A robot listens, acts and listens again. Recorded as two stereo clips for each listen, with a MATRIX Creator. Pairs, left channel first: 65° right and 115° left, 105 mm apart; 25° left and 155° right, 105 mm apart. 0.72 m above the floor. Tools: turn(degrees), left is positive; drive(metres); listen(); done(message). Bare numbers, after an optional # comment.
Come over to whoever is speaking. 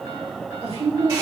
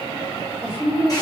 # The woman speaking: 120° left.
turn(120)
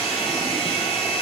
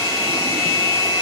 listen()
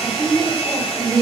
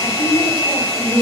drive(1.0)
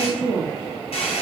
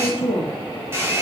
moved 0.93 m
drive(1.0)
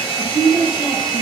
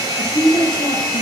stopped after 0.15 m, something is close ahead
# The woman speaking is now 10° right.
turn(-10)
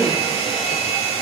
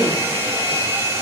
listen()
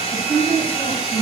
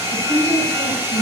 done("Arrived at the woman speaking, straight ahead.")